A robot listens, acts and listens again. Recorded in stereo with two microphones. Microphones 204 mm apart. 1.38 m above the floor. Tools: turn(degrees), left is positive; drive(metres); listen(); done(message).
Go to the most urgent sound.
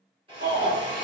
turn(degrees=-60)
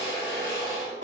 listen()
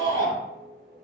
turn(degrees=-65)
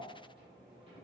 listen()
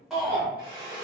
drive(metres=1.0)
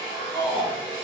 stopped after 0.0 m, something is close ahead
done("Blocked. The shout is further on, straight ahead.")